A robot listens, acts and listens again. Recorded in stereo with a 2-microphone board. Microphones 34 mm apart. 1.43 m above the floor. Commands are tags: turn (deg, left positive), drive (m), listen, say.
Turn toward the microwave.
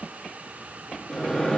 <turn deg="15"/>
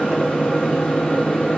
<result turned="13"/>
<turn deg="150"/>
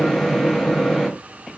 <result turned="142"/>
<say>Found it: a microwave, straight ahead.</say>